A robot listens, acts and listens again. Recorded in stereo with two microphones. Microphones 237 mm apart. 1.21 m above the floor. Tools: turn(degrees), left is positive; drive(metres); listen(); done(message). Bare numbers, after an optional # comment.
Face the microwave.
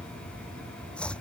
listen()
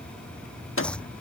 # The microwave: about 60° left or 120° left.
turn(60)
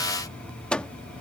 done("Facing the microwave.")